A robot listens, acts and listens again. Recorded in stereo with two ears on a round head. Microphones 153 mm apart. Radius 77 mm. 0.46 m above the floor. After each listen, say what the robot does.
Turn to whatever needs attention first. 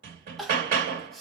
Turn 30° left.
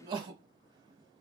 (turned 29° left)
Turn 30° right.
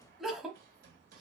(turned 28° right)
Found it: crying, straight ahead.